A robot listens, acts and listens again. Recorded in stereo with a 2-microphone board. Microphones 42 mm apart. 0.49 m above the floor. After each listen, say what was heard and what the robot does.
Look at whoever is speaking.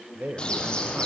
The man speaking: about 50° right or 130° right. Turn 50° right.
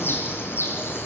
Keep listening.
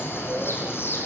Keep listening.
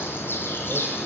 I heard a man speaking, but can't make it out now. It was about straight ahead or 80° right.